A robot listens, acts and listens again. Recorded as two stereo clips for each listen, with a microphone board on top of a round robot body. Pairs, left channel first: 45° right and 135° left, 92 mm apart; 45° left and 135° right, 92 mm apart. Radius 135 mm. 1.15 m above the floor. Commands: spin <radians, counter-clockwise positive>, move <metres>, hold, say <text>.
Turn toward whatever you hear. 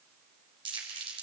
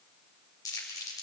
spin 1.75
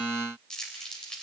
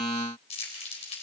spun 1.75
spin 0.61
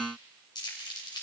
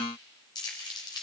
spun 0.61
say Found it: crumpling, straight ahead.